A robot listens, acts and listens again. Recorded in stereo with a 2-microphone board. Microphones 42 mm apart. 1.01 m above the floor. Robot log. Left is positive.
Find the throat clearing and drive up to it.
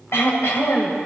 cmd yaw +90
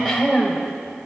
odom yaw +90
cmd fwd 1.0
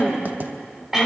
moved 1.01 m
note: The throat clearing is now 10° right.
cmd yaw -10
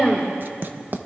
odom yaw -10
cmd fwd 1.0
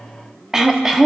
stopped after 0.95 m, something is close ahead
note: The throat clearing is now 10° right.
cmd yaw -10
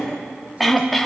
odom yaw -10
end: I am next to the throat clearing.